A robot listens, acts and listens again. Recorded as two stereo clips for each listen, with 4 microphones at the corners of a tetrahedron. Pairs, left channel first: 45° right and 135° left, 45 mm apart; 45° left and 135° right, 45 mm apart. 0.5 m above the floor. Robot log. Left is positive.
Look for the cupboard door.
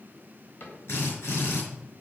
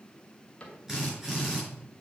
note: The cupboard door: 15° right.
cmd yaw -15
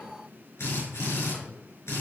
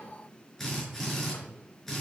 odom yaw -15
cmd idle
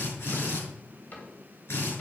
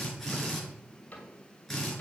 end: Facing the cupboard door, 2 to 4 m away.